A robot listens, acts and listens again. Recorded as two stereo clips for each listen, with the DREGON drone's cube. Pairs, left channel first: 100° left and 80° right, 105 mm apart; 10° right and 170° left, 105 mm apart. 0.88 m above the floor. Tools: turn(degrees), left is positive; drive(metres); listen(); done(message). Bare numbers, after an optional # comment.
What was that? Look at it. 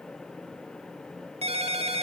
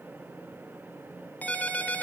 # The ringtone: 85° right.
turn(-85)
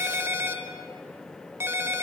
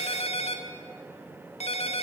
# The ringtone is now 15° right.
turn(-15)
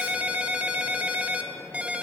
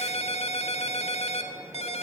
done("Facing the ringtone, 2 to 4 m away.")